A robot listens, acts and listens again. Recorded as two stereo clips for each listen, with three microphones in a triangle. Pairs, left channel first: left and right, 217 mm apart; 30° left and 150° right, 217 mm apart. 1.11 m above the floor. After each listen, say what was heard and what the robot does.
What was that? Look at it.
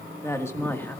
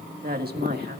The woman speaking: 170° left. Turn 170° left.
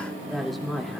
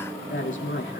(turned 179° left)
Found it: a woman speaking, straight ahead.